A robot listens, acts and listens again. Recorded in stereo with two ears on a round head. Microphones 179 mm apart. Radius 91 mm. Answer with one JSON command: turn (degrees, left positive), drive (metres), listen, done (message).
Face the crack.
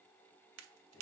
{"turn": -90}
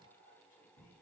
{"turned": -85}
{"done": "Facing where the crack came from. I can't hear it now."}